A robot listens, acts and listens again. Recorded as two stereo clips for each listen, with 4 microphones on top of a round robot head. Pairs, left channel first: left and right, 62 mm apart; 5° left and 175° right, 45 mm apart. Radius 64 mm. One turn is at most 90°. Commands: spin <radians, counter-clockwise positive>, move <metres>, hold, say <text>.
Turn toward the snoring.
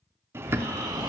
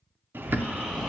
spin -1.57
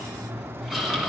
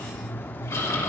say Facing the snoring, 2 to 4 m away.